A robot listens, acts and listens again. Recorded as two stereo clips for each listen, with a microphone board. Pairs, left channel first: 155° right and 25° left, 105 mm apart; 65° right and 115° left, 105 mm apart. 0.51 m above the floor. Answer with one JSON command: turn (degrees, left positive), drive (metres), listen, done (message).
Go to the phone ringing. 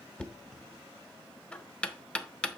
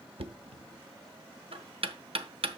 {"listen": true}
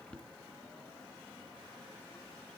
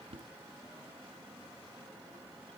{"listen": true}
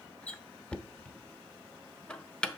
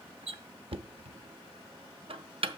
{"done": "I can't make out a phone ringing to turn to."}